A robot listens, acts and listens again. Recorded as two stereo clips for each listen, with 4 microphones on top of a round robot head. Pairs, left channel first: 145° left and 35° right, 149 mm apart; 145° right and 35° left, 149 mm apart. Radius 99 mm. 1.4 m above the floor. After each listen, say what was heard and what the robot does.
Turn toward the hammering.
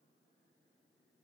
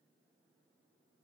Keep listening.
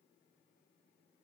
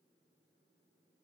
Keep listening.
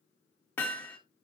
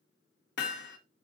The hammering: 135° right. Turn 135° right.
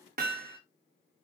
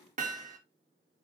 Found it: hammering, straight ahead, 1 to 2 m away.